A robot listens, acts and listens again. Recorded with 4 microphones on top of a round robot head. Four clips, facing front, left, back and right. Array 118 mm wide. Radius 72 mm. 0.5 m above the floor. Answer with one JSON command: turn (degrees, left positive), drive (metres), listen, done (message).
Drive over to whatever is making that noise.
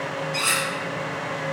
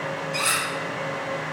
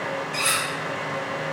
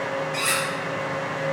{"turn": 140}
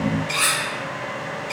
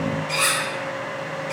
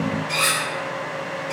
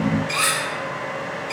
{"turn": -20}
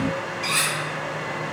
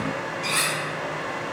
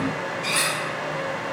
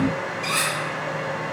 {"turn": 10}
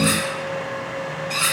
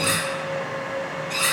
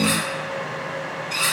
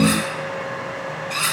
{"drive": 1.0}
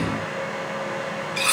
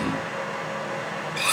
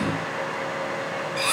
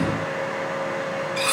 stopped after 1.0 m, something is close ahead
{"done": "I am next to the cutlery clinking."}